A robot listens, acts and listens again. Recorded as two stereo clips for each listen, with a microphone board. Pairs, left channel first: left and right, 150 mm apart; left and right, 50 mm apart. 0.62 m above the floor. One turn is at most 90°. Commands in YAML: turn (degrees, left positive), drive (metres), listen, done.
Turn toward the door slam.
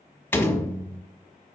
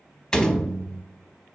turn: 30
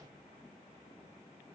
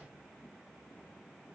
listen: true
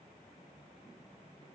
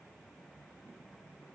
done: "I heard a door slam, but can't make it out now. It was about 15° right or 135° left."